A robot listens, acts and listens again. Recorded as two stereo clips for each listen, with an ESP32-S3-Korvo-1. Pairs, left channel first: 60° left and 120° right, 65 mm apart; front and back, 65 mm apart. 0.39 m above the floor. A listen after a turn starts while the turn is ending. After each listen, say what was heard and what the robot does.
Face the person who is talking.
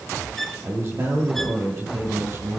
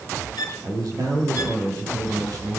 The man speaking: 160° right. Turn 160° right.
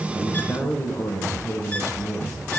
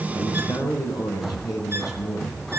The man speaking is now 15° left. Turn 15° left.
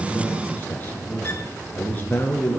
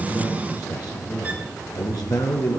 Found it: a man speaking, straight ahead.